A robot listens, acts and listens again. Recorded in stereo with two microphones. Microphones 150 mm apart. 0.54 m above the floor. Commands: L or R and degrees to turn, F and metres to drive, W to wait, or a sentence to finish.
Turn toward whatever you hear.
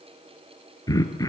L25
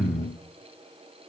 Facing the throat clearing, 1 to 2 m away.